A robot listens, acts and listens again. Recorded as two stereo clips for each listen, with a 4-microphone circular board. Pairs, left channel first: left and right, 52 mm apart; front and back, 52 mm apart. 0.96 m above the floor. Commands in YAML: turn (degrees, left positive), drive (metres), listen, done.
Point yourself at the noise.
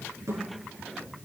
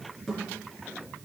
turn: -85
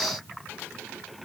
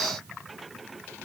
done: "Facing where the thud came from. I can't hear it now."